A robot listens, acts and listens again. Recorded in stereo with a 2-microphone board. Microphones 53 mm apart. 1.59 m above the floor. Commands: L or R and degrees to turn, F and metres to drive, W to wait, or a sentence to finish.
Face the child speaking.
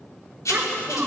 R30
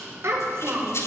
R125
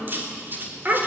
R35
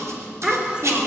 R15
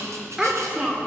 R15
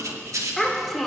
Found it: a child speaking, straight ahead, 2 to 4 m away.